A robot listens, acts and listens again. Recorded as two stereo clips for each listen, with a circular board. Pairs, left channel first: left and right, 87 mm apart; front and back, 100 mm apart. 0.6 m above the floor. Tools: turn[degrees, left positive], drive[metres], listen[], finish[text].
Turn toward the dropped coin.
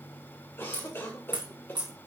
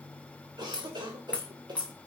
Thought: The dropped coin: 75° right.
Action: turn[-75]
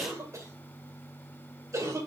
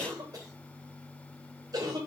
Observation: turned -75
Action: finish[Facing where the dropped coin came from. I can't hear it now.]